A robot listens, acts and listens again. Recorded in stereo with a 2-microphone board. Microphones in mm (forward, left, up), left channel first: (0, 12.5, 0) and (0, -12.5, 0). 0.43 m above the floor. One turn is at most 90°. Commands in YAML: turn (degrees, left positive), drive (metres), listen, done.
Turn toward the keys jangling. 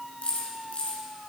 turn: 60
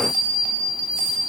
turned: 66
listen: true
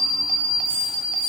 listen: true
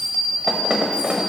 done: "I heard keys jangling, but can't make it out now. It was about 10° right or 55° left."